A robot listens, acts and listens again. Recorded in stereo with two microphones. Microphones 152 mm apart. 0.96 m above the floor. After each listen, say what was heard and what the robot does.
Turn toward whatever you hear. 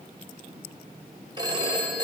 The phone ringing: about 25° right or 155° right. Turn 25° right.
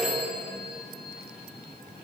Found it: a phone ringing, straight ahead.